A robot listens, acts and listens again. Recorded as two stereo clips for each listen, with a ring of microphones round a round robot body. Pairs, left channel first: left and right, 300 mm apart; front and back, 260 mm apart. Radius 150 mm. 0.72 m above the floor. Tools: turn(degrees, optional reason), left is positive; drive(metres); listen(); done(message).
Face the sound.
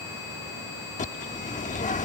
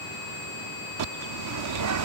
turn(degrees=155, reason="The bird: 155° left.")
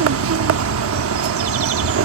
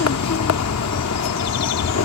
turn(degrees=-40, reason="The bird is now 40° right.")
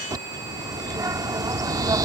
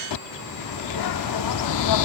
turn(degrees=-10, reason="The bird is now 10° right.")
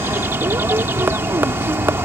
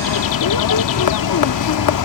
done("Facing the bird.")